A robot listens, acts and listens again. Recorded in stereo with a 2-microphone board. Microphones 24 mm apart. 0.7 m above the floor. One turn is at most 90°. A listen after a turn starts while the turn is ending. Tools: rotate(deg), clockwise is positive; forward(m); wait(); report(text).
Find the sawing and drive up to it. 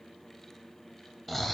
wait()
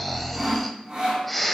rotate(40)
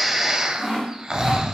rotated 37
forward(1.0)
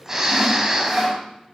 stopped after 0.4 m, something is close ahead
report("Something is in my way. I am facing the sawing but have not reached it.")